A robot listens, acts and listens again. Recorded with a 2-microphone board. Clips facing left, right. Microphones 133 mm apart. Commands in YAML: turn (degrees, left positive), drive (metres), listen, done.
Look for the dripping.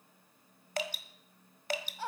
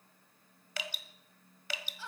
turn: 45
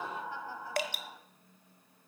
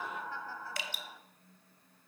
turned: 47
turn: 85
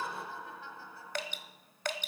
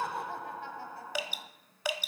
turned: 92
turn: -10
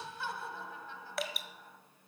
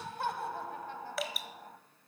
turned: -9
done: "Facing the dripping, 1 to 2 m away."